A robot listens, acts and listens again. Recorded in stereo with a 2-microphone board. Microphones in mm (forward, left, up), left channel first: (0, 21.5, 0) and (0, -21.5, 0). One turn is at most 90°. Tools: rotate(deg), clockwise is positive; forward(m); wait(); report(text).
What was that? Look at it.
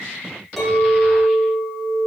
rotate(-30)
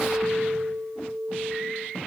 rotate(-90)
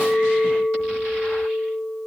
rotate(-75)
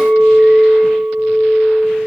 rotate(-25)
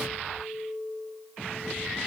rotate(-10)
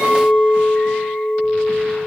report("Found it: a clink, straight ahead, 1 to 2 m away.")